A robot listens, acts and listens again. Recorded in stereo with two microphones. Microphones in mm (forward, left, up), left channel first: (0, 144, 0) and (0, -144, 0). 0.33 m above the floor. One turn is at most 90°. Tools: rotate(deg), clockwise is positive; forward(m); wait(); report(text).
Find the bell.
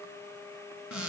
wait()
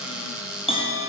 rotate(-20)
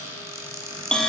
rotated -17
report("Found it: a bell, straight ahead, 2 to 4 m away.")